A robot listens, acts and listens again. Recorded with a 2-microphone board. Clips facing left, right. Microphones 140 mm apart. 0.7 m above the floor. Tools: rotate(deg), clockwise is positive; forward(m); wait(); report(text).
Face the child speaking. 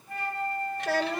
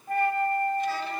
rotate(-90)
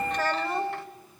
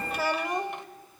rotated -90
rotate(15)
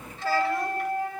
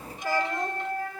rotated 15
wait()
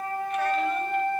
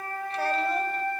wait()
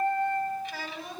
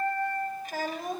rotate(45)
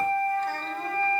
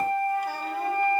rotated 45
wait()
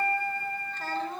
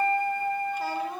rotate(10)
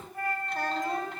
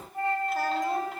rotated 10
wait()
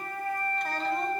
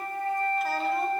wait()
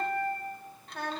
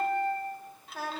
report("Facing the child speaking.")